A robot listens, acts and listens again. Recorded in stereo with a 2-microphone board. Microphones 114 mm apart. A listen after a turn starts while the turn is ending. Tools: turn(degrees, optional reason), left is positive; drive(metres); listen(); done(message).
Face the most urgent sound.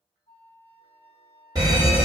turn(degrees=-30, reason="The fire alarm: about 30° right or 150° right.")
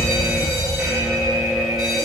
done("Facing the fire alarm.")